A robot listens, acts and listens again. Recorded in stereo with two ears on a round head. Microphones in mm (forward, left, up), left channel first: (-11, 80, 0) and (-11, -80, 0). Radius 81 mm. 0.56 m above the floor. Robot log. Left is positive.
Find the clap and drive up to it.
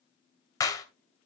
note: The clap: about 20° left or 160° left.
cmd yaw +20
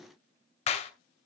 note: So it is at 140° left.
cmd yaw +140
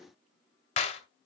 note: The clap is now 40° left.
cmd yaw +40
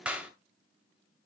cmd fwd 1.0
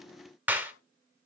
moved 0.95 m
note: The clap is now 10° right.
cmd yaw -10
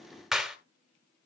cmd fwd 1.0
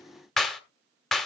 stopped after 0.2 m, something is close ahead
end: I am next to the clap.